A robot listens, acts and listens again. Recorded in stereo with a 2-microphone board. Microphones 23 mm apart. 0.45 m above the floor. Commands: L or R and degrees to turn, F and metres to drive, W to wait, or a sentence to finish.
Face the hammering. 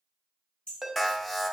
L55
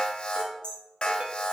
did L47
L60
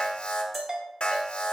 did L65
W
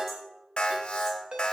W
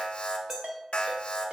Facing where the hammering came from. I can't hear it now.